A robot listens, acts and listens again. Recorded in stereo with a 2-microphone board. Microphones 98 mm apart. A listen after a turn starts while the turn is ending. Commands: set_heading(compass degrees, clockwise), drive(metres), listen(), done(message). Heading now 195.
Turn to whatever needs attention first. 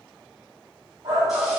set_heading(240)
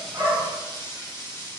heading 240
listen()
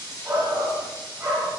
set_heading(250)
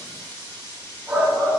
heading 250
done("Facing the shout, 1 to 2 m away.")